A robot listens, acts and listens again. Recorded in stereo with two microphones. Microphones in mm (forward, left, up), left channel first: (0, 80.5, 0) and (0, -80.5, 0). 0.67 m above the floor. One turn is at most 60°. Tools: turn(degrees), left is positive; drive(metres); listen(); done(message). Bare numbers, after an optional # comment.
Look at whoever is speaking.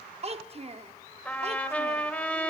# The child speaking: about 40° right or 140° right.
turn(-40)
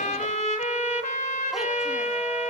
listen()
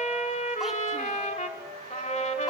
listen()
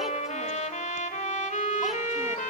done("I heard a child speaking, but can't make it out now. It was about straight ahead or 100° right.")